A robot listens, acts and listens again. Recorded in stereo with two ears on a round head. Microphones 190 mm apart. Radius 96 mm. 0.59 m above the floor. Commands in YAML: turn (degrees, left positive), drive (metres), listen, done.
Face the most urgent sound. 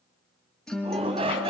turn: -30
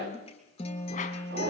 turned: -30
turn: -125
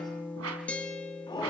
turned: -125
turn: 20
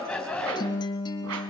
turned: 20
done: "Found it: a shout, straight ahead."